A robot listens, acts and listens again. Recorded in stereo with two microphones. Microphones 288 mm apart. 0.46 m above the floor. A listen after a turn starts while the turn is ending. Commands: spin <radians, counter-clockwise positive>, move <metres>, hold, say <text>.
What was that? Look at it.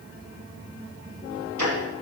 spin -1.57
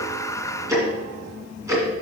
spin -0.17
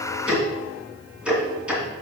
say Facing the ticking.